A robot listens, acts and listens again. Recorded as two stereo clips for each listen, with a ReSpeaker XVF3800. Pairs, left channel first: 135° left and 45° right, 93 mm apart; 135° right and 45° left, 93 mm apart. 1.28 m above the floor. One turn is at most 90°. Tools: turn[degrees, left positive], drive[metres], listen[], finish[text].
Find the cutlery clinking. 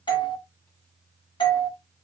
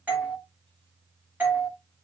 Action: listen[]
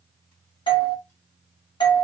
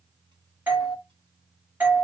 Action: listen[]
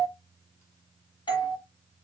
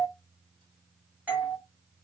Action: finish[I can't make out cutlery clinking, only a doorbell.]